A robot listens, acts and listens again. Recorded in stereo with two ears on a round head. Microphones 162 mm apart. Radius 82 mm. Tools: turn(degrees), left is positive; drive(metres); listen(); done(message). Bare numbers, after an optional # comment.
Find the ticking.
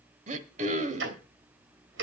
# The ticking: about 70° right or 110° right.
turn(-70)
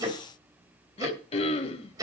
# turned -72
# So it is at 20° right.
turn(-20)
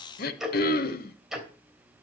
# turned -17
done("Found it: ticking, straight ahead, 2 to 4 m away.")